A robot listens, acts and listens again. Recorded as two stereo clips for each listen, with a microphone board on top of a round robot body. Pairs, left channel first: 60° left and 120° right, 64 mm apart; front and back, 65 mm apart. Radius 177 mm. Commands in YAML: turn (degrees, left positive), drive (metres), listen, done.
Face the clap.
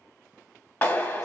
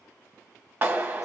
turn: 120
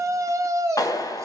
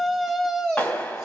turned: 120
turn: 60
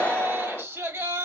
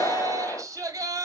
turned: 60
turn: -15
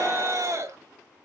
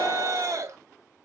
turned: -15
listen: true
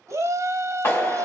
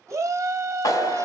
done: "Facing the clap."